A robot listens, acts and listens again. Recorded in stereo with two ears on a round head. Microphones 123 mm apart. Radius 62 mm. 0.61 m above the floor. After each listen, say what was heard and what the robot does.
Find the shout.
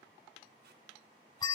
Keep listening.
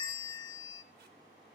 Keep listening.
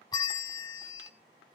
I can't make out a shout to turn to.